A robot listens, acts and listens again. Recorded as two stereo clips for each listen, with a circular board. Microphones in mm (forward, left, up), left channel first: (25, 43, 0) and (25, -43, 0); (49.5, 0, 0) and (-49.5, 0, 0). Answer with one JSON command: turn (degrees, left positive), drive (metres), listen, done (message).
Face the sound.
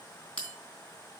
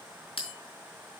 {"turn": 10}
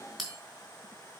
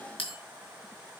{"done": "Facing the bell, 2 to 4 m away."}